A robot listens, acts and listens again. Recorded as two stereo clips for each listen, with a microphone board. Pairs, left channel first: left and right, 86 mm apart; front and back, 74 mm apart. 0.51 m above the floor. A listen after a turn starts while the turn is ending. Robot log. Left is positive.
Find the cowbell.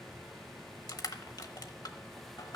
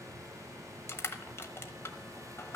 cmd idle
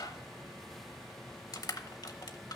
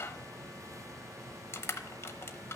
cmd idle
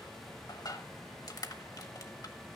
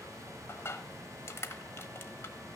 end: I can't make out a cowbell, only crushing.